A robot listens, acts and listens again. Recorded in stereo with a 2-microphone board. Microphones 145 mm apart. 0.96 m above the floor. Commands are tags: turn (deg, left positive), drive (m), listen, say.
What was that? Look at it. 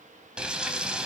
<turn deg="-30"/>
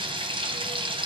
<turn deg="-145"/>
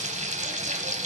<turn deg="-55"/>
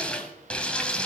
<say>Facing the frying.</say>